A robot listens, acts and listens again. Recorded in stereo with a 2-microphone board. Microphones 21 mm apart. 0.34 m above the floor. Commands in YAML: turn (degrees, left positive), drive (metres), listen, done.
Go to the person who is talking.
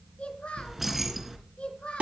turn: 60
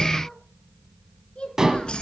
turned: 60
turn: 60
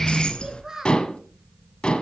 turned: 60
turn: -20
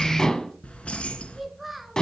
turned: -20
drive: 1.0
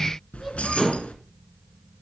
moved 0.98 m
listen: true
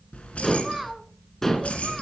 drive: 1.0
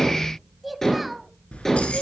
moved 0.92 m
drive: 1.0
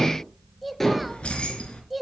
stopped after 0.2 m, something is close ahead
done: "I am next to the child speaking."